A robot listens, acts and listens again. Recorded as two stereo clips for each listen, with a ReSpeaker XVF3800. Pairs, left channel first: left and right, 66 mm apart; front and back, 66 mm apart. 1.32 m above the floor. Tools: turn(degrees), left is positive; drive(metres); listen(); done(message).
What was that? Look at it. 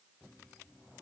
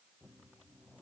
listen()
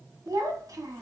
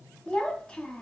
turn(degrees=-75)
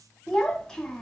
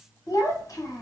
done("Found it: a child speaking, straight ahead.")